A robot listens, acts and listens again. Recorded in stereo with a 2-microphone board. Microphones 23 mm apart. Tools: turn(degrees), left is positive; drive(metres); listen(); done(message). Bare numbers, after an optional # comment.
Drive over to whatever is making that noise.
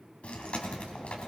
# The chewing: about 65° left or 115° left.
turn(65)
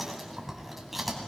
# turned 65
drive(1.0)
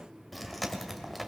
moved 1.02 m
drive(1.0)
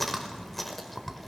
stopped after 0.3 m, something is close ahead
done("Arrived at the chewing, straight ahead.")